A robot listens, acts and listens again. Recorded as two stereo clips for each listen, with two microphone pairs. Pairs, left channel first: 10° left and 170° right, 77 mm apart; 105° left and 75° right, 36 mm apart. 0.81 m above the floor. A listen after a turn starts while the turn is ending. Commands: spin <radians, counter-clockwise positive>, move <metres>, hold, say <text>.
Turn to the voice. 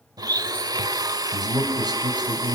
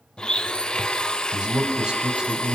spin -2.53
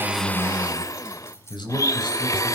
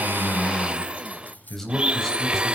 spin 0.44
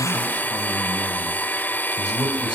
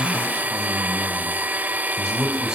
say Found it: a man speaking, straight ahead, over 4 m away.